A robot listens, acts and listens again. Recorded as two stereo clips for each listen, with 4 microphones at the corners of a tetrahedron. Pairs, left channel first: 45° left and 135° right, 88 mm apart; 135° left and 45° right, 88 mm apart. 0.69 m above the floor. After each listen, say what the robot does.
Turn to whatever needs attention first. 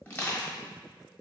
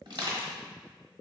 Keep listening.
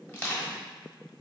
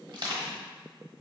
Keep listening.
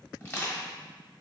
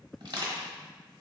I can't make out anything urgent to turn to.